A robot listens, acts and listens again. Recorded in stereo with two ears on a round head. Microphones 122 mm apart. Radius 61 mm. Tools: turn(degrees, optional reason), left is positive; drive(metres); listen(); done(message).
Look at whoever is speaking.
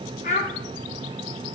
turn(degrees=55, reason="The child speaking: about 55° left or 125° left.")
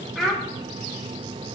done("Found it: a child speaking, straight ahead.")